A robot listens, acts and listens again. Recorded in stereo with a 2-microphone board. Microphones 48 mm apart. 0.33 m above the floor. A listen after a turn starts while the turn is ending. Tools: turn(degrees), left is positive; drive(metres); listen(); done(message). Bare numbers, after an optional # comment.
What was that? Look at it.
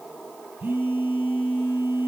# The phone buzzing: about 50° right or 130° right.
turn(-50)
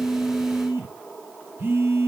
# So it is at 70° right.
turn(-70)
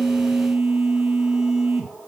# The phone buzzing is now 15° right.
turn(-15)
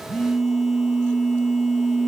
done("Facing the phone buzzing, 1 to 2 m away.")